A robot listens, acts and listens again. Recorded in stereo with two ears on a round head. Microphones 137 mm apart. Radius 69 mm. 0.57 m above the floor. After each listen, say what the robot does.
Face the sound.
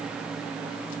Keep listening.
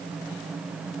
Keep listening.
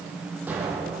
Turn 30° right.
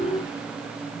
Keep listening.
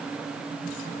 I heard an explosion, but can't make it out now. It was about 20° left or 140° right.